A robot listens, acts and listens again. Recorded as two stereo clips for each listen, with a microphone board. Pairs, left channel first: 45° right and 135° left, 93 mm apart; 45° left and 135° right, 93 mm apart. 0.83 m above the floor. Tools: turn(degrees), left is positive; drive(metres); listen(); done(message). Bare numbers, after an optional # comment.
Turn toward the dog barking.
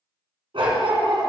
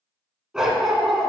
# The dog barking: 135° left.
turn(135)
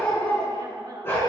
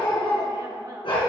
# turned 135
# The dog barking is now 15° left.
turn(15)
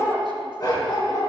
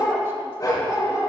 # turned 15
# The dog barking is now 10° right.
turn(-10)
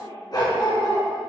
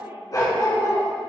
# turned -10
# The dog barking is now 10° right.
turn(-10)
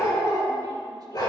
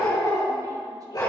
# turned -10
done("Facing the dog barking, 2 to 4 m away.")